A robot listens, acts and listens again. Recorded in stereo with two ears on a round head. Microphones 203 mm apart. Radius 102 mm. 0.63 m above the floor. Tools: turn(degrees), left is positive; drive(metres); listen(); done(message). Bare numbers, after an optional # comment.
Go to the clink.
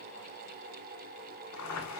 listen()
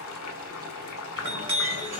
# The clink: about 30° right or 150° right.
turn(-30)
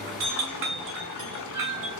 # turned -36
# So it is at 120° right.
turn(-120)
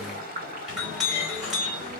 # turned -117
drive(1.0)
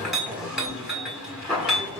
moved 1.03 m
drive(1.0)
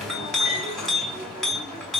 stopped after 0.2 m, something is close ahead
done("Arrived at the clink, straight ahead.")